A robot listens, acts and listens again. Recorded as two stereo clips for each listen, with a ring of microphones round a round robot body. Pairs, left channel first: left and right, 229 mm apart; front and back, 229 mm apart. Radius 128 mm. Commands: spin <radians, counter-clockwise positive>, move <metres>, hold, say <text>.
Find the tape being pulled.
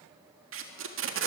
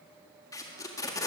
spin -1.31
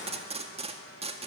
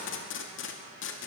spin -0.52
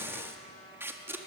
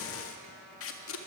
spin -0.17
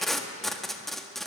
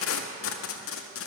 say Found it: tape being pulled, straight ahead.